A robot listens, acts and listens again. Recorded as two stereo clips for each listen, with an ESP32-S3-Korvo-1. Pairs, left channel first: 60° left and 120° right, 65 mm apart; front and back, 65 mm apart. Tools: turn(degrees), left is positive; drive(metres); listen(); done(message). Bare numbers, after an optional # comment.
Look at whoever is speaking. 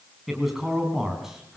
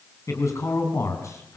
# The man speaking: 40° right.
turn(-40)
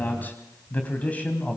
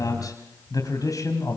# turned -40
# The man speaking is now 10° right.
turn(-10)
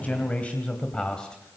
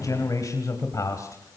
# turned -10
# The man speaking is now 15° right.
turn(-15)
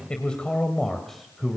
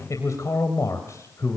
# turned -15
# The man speaking is now 30° right.
turn(-30)
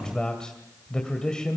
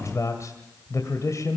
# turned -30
# The man speaking is now 15° right.
turn(-15)
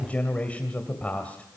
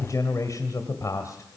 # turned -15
done("Facing the man speaking, 2 to 4 m away.")